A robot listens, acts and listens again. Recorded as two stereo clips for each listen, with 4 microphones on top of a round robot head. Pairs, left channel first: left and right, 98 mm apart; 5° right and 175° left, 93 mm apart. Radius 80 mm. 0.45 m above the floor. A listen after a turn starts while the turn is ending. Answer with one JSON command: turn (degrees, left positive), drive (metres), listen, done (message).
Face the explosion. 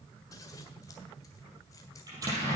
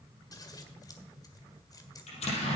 {"turn": -25}
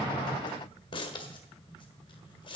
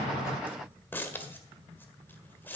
{"done": "Facing where the explosion came from. I can't hear it now."}